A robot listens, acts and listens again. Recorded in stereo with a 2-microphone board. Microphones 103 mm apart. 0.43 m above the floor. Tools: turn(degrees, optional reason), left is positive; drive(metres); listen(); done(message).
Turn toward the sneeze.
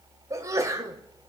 turn(degrees=-30, reason="The sneeze: about 30° right or 150° right.")
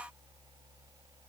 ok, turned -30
listen()
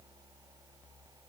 done("I heard a sneeze, but can't make it out now. It was about straight ahead or 120° right.")